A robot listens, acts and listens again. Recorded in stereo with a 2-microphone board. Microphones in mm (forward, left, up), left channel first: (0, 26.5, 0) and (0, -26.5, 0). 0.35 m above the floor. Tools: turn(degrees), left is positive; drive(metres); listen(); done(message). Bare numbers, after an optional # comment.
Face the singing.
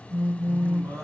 # The singing: about 70° right or 110° right.
turn(-70)
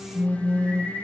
done("Found it: singing, straight ahead, 2 to 4 m away.")